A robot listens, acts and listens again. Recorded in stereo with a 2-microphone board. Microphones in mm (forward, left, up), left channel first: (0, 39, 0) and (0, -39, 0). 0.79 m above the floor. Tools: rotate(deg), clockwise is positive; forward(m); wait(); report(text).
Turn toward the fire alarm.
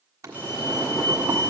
rotate(-50)
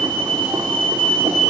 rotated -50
rotate(-20)
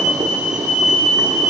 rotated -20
report("Facing the fire alarm, 2 to 4 m away.")